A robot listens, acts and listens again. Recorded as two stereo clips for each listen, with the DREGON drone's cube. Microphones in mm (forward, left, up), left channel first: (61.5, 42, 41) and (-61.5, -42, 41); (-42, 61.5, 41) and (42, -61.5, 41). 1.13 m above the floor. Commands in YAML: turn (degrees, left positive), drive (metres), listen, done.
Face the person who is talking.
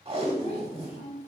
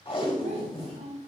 turn: -10
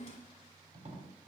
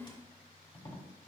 done: "Found it: a child speaking, straight ahead, 1 to 2 m away."